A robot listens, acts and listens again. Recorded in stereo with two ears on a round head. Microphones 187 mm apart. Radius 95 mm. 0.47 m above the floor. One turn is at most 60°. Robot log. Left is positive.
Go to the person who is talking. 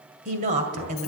note: The woman speaking: about 35° right or 145° right.
cmd yaw -35
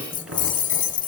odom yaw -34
cmd idle
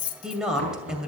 cmd fwd 1.0
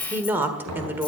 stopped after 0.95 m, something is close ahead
note: The woman speaking is now 10° right.
cmd yaw -10
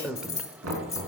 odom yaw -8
end: Arrived at the woman speaking, straight ahead.